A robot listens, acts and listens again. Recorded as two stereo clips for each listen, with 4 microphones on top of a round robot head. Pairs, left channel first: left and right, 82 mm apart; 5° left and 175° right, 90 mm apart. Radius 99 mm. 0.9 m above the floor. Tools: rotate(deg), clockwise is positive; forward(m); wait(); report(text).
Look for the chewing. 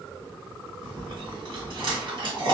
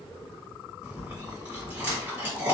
rotate(100)
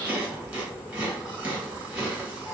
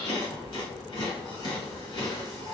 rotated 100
rotate(15)
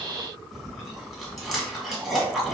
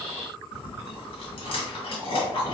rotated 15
report("Facing the chewing.")